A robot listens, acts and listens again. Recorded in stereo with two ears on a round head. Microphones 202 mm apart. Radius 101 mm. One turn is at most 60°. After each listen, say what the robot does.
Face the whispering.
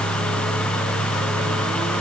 Keep listening.
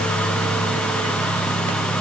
Keep listening.
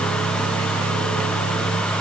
I can't make out whispering.